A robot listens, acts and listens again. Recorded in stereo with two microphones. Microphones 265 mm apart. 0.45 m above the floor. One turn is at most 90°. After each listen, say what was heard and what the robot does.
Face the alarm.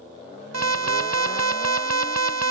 The alarm: about 70° right or 110° right. Turn 70° right.
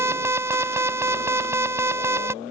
So it is at 10° right. Turn 10° right.
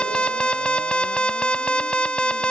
Facing the alarm.